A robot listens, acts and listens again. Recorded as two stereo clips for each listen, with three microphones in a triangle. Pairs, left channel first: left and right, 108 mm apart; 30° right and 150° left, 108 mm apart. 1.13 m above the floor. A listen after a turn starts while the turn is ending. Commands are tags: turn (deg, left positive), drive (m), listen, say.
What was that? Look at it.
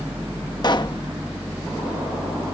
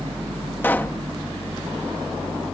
<turn deg="40"/>
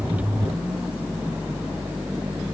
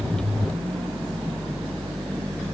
<say>I heard a pop from this way, but can't make it out now.</say>